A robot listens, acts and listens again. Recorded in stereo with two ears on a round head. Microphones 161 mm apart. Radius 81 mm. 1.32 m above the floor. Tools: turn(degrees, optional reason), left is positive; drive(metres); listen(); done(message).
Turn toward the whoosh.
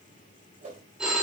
turn(degrees=-40, reason="The whoosh: about 40° right or 140° right.")
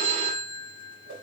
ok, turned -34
turn(degrees=-105, reason="So it is at 105° right.")
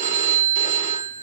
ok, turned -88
turn(degrees=-15, reason="Nothing new. It was at 15° right.")
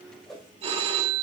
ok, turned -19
done("Found it: a whoosh, straight ahead, over 4 m away.")